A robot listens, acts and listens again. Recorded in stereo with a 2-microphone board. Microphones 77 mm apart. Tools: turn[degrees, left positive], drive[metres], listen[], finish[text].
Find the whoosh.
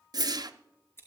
Thought: The whoosh: about 60° right or 120° right.
Action: turn[-60]
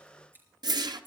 Thought: So it is at 60° right.
Action: turn[-60]
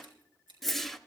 Action: finish[Facing the whoosh, under 1 m away.]